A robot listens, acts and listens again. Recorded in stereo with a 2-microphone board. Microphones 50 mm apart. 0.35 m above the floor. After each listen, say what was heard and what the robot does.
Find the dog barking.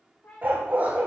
The dog barking: about 35° right or 145° right. Turn 35° right.
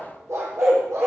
So it is at 110° right. Turn 110° right.
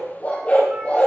The dog barking is now 30° left. Turn 30° left.
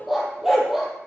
Facing the dog barking.